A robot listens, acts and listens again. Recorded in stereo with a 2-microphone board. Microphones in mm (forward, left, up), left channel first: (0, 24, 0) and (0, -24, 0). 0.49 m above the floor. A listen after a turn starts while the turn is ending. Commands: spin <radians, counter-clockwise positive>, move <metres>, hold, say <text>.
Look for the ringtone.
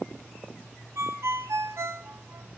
spin -1.57
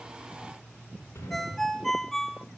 say Found it: a ringtone, straight ahead.